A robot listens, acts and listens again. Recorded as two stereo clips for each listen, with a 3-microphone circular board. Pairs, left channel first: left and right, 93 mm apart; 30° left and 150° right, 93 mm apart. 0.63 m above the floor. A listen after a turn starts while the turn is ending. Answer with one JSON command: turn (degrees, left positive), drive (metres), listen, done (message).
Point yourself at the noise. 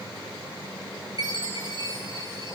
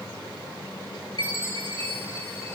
{"turn": -135}
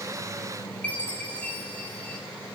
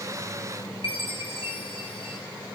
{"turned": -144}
{"turn": 15}
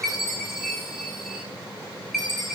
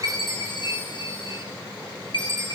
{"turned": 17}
{"done": "Facing the chime."}